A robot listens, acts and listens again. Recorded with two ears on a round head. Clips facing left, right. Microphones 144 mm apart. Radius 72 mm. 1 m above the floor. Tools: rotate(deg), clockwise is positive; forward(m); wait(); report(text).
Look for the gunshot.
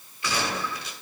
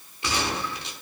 rotate(25)
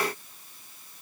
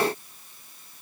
wait()
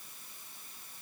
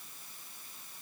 report("I heard a gunshot, but can't make it out now. It was about straight ahead or 130° right.")